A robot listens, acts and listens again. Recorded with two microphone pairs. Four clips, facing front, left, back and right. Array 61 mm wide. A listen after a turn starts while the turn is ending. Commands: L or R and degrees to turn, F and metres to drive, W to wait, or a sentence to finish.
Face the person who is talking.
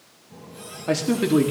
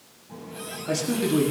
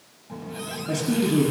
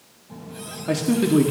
R25
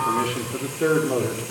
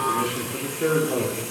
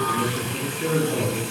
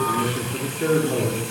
Facing the man speaking, 2 to 4 m away.